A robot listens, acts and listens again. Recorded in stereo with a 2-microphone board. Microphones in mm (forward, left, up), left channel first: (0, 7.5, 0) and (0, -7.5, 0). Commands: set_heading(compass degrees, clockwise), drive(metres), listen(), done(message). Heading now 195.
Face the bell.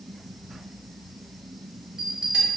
set_heading(260)
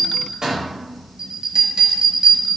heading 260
set_heading(300)
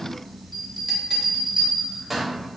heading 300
done("Facing the bell, under 1 m away.")